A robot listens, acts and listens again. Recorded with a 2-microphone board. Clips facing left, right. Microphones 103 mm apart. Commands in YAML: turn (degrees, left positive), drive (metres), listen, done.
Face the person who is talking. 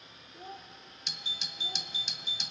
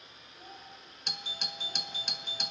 turn: 25
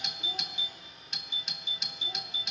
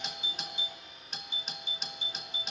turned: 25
listen: true
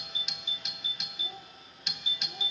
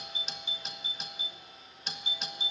listen: true
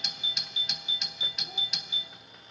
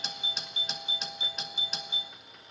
done: "I heard a child speaking, but can't make it out now. It was about straight ahead or 130° left."